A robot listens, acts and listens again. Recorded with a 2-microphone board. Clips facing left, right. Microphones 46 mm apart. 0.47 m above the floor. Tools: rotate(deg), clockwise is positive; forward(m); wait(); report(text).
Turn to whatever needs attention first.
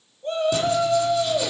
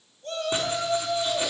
rotate(-20)
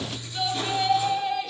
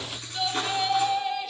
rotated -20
report("Facing the shout, 2 to 4 m away.")